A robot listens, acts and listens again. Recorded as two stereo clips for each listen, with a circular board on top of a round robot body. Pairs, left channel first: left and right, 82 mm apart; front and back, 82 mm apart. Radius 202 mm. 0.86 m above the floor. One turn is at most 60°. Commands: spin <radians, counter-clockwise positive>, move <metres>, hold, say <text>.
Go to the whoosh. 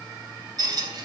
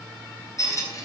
hold
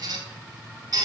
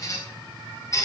hold
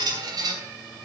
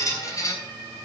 say I can't make out a whoosh to turn to.